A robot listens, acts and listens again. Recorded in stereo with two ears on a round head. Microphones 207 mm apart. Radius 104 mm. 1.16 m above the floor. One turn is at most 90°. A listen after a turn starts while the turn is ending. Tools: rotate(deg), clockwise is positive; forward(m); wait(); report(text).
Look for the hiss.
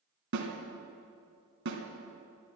wait()
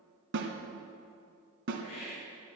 rotate(-75)
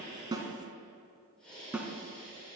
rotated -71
report("Found it: a hiss, straight ahead.")